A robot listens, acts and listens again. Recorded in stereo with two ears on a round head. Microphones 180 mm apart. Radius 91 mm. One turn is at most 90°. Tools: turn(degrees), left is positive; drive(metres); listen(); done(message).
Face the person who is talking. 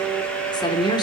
turn(degrees=25)
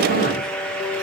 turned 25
listen()
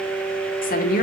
turn(degrees=90)
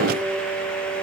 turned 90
turn(degrees=40)
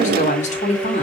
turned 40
turn(degrees=40)
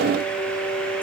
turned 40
listen()
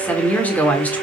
turn(degrees=10)
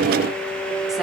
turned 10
listen()
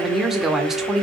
done("Facing the woman speaking.")